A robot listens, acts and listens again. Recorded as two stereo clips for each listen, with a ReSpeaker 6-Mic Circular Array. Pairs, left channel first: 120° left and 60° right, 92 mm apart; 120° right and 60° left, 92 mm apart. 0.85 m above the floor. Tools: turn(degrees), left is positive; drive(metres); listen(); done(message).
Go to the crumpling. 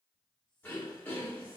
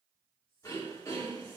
listen()
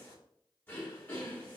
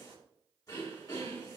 listen()
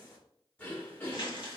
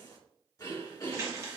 turn(degrees=115)
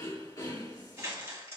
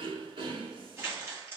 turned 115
drive(metres=1.0)
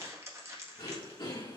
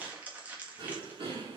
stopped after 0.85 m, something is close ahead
turn(degrees=-10)
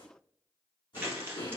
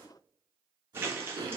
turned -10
done("I am next to the crumpling.")